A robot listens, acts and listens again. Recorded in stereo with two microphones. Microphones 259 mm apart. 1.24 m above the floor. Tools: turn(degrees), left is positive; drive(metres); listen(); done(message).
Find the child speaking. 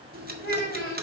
turn(degrees=35)
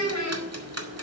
turn(degrees=105)
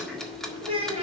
turn(degrees=-20)
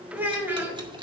done("Facing the child speaking, 2 to 4 m away.")